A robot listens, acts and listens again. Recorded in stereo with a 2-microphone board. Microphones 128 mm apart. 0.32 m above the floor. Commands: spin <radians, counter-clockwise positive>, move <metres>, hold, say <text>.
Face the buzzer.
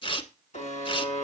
spin 1.22
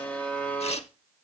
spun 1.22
spin 0.26
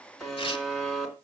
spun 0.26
say Facing the buzzer, 2 to 4 m away.